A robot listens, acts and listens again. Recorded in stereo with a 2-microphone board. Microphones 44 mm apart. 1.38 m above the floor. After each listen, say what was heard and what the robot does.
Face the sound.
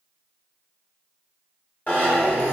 The zipper: about 35° left or 145° left. Turn 35° left.
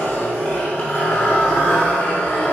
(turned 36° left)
So it is at 110° left. Turn 110° left.
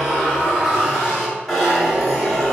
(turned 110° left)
Facing the zipper, 2 to 4 m away.